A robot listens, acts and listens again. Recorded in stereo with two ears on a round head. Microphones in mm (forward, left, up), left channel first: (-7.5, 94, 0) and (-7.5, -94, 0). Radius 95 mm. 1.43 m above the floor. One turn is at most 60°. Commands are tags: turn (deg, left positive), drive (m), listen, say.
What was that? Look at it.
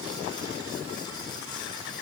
<listen/>
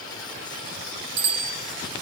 <turn deg="-55"/>
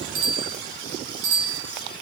<turn deg="-60"/>
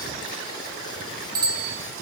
<turn deg="-20"/>
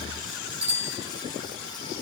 <say>Found it: a bicycle bell, straight ahead, over 4 m away.</say>